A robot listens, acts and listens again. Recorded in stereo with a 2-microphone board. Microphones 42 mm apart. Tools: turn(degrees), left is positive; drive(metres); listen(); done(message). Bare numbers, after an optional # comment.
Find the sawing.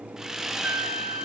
turn(-30)
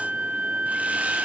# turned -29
listen()
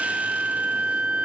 listen()
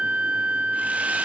done("I heard sawing, but can't make it out now. It was about 15° left or 135° right.")